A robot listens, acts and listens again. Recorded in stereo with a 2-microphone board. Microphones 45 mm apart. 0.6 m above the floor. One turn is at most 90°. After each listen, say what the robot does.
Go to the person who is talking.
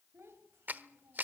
Turn 70° right.
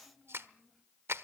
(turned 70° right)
Drive 1.0 m forward.
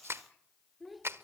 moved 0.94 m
Drive 1.0 m forward.
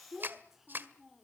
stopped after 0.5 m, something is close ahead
I am next to the child speaking.